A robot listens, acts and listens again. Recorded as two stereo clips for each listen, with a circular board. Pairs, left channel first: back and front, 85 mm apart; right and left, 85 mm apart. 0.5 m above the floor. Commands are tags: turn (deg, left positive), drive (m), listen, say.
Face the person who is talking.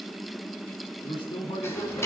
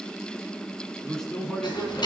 <turn deg="-175"/>
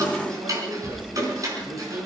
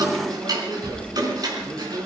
<listen/>
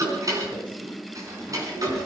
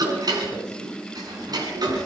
<listen/>
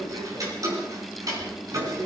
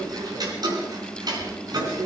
<turn deg="30"/>
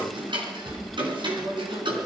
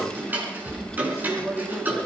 <say>Facing the man speaking, over 4 m away.</say>